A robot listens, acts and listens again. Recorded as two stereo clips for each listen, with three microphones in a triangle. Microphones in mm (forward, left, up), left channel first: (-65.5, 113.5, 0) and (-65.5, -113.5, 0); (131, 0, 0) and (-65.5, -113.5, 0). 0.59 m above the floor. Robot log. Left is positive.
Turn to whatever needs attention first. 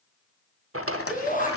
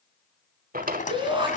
note: The shout: 140° left.
cmd yaw +140
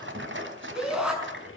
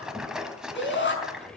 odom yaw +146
end: Found it: a shout, straight ahead.